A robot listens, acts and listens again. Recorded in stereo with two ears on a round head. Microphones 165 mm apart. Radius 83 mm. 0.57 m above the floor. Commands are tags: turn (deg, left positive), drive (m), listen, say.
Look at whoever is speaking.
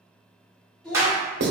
<turn deg="30"/>
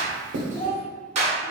<turn deg="135"/>
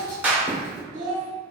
<turn deg="-45"/>
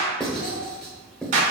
<listen/>
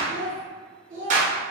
<turn deg="-30"/>
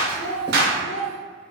<say>Found it: a child speaking, straight ahead.</say>